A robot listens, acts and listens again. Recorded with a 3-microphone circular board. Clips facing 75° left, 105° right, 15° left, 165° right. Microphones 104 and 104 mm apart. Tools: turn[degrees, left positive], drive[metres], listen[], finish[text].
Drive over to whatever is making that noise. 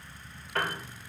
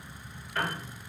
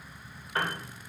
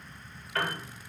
Thought: The piano: 80° left.
Action: turn[80]
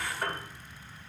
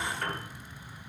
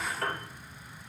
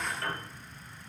Action: drive[1.0]
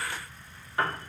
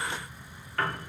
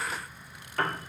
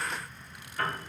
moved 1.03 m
Action: drive[1.0]
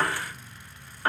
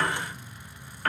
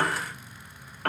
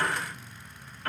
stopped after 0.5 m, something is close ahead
Action: finish[I am next to the piano.]